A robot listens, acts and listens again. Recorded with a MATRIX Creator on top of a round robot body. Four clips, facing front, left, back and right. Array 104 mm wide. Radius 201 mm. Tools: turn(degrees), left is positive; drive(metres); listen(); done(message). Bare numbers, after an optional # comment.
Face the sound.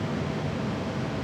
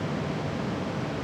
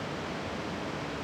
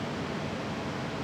listen()
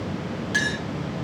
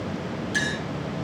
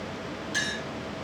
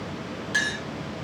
# The clink: 35° right.
turn(-35)
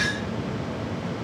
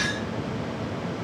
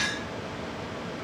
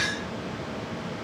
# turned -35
listen()
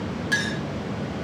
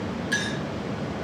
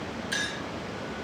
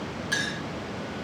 done("Facing the clink.")